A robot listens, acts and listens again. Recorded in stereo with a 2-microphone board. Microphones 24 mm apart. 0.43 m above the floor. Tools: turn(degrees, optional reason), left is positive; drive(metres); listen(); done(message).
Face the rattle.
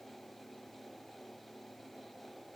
listen()
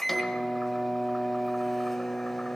listen()
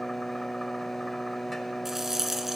turn(degrees=-30)
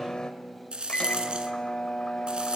turn(degrees=-135, reason="So it is at 135° right.")
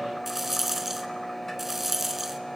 turn(degrees=-10, reason="The rattle is now 10° right.")
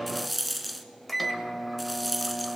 done("Found it: a rattle, straight ahead, under 1 m away.")